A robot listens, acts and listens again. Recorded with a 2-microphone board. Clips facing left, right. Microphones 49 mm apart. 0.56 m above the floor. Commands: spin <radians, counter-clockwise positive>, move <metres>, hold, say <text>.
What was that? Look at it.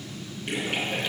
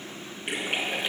spin -0.35
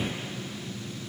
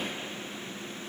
hold
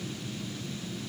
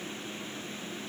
say I heard a splash, but can't make it out now. It was about straight ahead or 140° right.